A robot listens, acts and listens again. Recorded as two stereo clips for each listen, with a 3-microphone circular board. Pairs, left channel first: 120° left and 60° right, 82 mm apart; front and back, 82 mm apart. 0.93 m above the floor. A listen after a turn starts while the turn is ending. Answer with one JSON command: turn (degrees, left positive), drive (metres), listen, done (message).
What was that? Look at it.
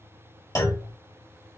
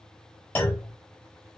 {"turn": 70}
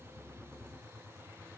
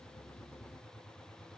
{"done": "Facing where the clunk came from. I can't hear it now."}